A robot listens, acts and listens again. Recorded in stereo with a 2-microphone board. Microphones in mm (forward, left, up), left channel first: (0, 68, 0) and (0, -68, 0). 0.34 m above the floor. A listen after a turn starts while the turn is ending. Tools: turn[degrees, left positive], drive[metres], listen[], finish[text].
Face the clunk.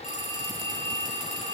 Action: listen[]
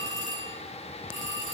Action: listen[]
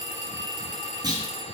Thought: The clunk: about 30° right or 150° right.
Action: turn[-30]
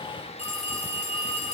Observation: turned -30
Action: listen[]
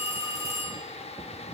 Action: finish[I heard a clunk, but can't make it out now. It was about straight ahead or 120° right.]